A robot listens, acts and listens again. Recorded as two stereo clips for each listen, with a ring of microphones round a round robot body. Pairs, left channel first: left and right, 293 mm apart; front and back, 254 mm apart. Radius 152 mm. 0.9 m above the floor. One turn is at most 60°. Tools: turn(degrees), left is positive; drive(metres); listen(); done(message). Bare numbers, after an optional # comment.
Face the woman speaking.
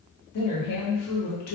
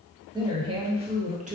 # The woman speaking: 120° left.
turn(60)
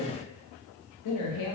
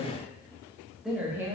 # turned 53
# The woman speaking is now 105° left.
turn(60)
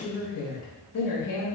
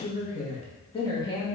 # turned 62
# The woman speaking is now 75° left.
turn(60)
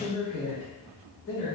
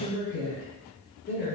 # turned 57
# The woman speaking is now 40° left.
turn(40)
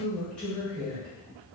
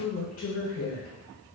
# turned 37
done("Found it: a woman speaking, straight ahead.")